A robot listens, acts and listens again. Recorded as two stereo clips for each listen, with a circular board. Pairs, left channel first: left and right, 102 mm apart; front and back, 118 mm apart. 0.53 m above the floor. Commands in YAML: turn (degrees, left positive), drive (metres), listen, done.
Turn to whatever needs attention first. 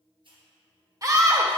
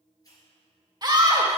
turn: -135
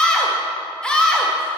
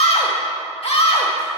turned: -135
turn: 10
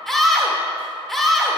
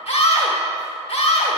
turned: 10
done: "Found it: a scream, straight ahead, 1 to 2 m away."